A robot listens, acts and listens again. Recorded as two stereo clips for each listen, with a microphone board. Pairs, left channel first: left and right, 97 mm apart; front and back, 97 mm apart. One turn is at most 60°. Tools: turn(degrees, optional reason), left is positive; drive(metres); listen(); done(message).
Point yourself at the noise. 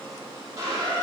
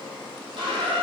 turn(degrees=-60, reason="The squeak: 150° right.")
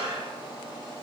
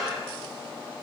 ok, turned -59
turn(degrees=-60, reason="The squeak is now 90° right.")
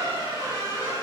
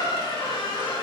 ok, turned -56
turn(degrees=-30, reason="The squeak is now 30° right.")
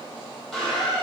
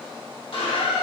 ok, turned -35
done("Found it: a squeak, straight ahead, 2 to 4 m away.")